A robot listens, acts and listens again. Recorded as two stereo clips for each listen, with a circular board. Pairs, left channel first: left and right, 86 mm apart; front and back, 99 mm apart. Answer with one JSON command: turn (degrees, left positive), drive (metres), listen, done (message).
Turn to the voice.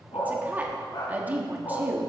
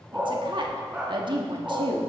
{"turn": -160}
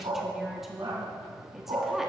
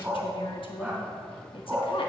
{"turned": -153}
{"done": "Facing the woman speaking, 1 to 2 m away."}